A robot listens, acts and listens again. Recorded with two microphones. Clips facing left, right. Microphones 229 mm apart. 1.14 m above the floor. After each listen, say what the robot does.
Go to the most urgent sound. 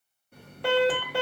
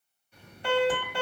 Turn 90° left.
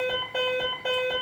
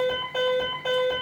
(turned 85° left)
Turn 10° left.
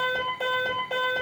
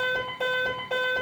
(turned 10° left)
Drive 1.0 m forward.
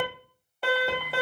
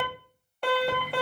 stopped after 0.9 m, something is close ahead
Arrived at the alarm, straight ahead.